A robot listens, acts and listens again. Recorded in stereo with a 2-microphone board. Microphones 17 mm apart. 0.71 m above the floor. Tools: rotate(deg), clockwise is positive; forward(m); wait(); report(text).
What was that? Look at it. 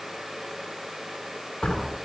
rotate(-90)
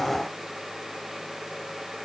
report("Facing where the door slam came from. I can't hear it now.")